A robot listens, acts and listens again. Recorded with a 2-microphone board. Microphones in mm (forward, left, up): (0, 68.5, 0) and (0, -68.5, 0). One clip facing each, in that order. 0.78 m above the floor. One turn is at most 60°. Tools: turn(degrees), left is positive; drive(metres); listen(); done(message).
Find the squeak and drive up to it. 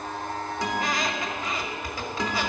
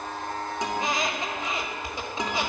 turn(degrees=-25)
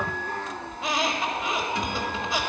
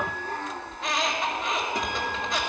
drive(metres=1.0)
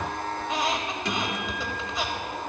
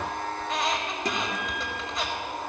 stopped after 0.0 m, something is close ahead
done("Something is in my way. I am facing the squeak but have not reached it.")